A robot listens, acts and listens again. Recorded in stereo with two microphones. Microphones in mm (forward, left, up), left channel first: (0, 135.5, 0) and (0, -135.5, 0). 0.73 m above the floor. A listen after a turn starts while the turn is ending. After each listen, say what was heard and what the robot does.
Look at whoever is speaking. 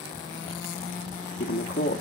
The man speaking: about 55° left or 125° left. Turn 55° left.
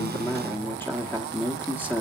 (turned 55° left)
So it is at 10° left. Turn 10° left.
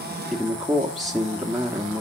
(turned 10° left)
Found it: a man speaking, straight ahead, 1 to 2 m away.